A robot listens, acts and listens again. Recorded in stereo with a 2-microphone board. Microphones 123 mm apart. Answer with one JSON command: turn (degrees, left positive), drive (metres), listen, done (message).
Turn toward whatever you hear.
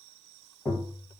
{"turn": 25}
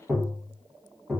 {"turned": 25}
{"done": "Found it: tapping, straight ahead."}